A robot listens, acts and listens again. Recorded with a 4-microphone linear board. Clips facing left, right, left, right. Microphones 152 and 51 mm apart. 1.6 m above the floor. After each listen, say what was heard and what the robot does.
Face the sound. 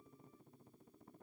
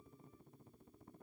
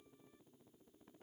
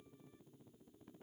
Keep listening.
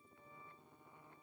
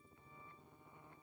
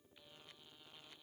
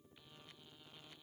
Keep listening.
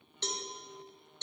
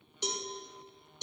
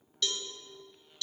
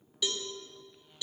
Turn 30° right.
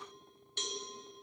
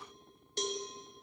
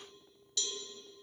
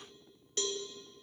So it is at 135° right. Turn 135° right.
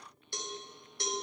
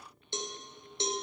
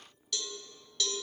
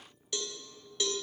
The cowbell is now 25° right. Turn 25° right.
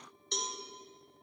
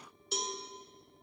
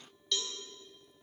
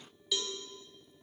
Found it: a cowbell, straight ahead.